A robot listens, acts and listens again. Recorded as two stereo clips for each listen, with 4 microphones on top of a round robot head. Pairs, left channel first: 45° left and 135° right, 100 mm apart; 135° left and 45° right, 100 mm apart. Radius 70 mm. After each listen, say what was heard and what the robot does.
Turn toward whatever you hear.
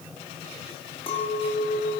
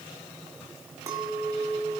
The clink: 15° left. Turn 15° left.
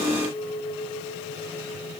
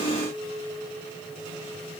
The clink is now 10° left. Turn 10° left.
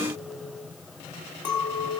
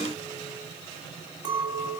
Found it: a clink, straight ahead.